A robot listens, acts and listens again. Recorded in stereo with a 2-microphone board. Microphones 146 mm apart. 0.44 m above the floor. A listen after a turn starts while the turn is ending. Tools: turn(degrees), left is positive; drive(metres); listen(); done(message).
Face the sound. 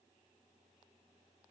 listen()
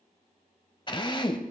turn(degrees=35)
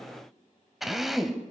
done("Found it: a drill, straight ahead.")